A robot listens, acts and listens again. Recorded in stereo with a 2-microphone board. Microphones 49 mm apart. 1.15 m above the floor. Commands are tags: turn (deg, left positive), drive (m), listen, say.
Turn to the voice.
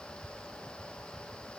<listen/>
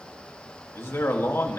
<turn deg="60"/>
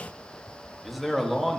<say>Facing the man speaking.</say>